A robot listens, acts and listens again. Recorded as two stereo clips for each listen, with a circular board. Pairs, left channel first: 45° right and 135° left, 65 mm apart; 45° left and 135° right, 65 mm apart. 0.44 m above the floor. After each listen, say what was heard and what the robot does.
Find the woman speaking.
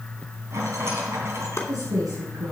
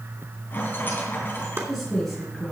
The woman speaking: 130° left. Turn 130° left.
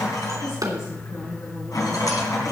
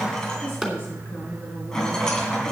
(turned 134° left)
The woman speaking is now 10° right. Turn 10° right.
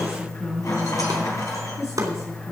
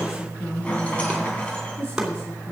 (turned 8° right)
The woman speaking is now 10° right. Turn 10° right.
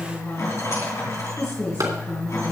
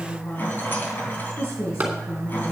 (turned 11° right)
Facing the woman speaking.